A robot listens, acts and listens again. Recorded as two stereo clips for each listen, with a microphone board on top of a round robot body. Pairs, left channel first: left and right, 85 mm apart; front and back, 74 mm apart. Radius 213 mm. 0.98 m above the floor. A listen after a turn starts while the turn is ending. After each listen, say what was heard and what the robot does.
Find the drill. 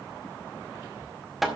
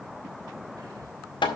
Keep listening.
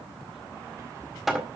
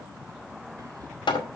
Keep listening.
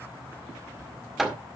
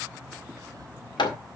I can't make out a drill, only hammering.